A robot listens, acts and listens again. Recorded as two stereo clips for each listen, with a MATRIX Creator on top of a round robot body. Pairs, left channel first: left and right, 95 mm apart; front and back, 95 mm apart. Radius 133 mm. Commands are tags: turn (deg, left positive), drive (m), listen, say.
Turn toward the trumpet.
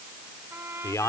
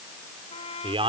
<turn deg="-25"/>
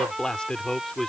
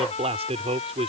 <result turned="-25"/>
<say>Found it: a trumpet, straight ahead.</say>